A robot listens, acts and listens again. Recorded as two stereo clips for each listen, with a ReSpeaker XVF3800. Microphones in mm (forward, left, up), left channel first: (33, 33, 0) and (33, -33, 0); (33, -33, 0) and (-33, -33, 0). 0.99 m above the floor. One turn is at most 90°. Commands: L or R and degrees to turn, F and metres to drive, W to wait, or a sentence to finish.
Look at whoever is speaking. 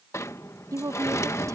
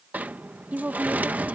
R90
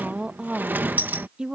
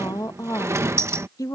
R15
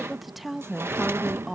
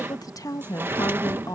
Facing the woman speaking.